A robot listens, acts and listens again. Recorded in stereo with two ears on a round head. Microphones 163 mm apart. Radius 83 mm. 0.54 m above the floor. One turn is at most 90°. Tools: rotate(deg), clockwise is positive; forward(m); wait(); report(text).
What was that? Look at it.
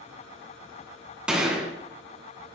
rotate(30)
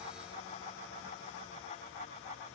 wait()
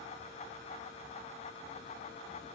report("I heard a gunshot, but can't make it out now. It was about 25° left or 145° right.")